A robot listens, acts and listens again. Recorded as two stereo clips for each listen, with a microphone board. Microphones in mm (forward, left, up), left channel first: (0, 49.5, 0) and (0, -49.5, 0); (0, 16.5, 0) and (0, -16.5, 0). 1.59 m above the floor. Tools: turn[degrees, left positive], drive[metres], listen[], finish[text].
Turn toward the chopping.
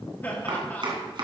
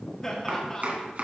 Thought: The chopping: about 50° right or 130° right.
Action: turn[-50]
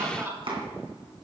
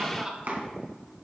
Thought: So it is at 70° right.
Action: turn[-70]
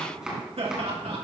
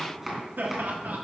Action: finish[Facing the chopping, 2 to 4 m away.]